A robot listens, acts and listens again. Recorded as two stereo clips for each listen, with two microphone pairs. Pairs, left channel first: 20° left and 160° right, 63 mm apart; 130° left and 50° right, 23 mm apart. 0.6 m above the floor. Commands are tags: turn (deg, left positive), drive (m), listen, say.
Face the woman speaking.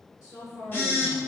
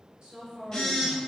<turn deg="10"/>
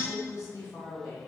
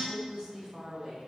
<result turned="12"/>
<turn deg="20"/>
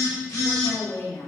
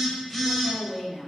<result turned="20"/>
<turn deg="35"/>
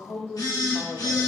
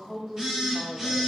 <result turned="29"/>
<turn deg="20"/>
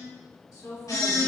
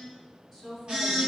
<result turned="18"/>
<turn deg="30"/>
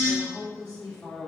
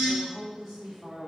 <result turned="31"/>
<say>Facing the woman speaking, 1 to 2 m away.</say>